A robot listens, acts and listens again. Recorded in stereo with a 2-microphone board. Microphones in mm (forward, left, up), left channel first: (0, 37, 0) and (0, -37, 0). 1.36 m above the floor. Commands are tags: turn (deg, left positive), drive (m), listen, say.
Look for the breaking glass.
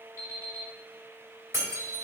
<turn deg="-40"/>
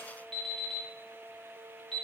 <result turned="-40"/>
<listen/>
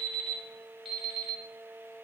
<say>I heard breaking glass, but can't make it out now. It was about straight ahead or 100° right.</say>